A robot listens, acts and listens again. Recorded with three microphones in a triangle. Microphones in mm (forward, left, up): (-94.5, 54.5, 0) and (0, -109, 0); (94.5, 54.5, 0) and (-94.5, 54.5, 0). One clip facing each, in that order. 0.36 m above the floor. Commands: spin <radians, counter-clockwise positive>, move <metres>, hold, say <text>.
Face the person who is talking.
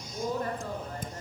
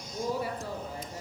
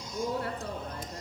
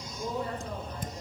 spin 0.35
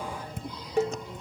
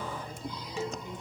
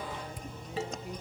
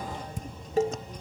hold
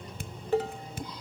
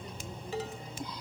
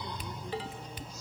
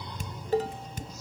hold
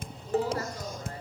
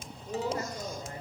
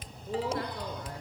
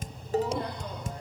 say I heard a woman speaking from this way, but can't make it out now.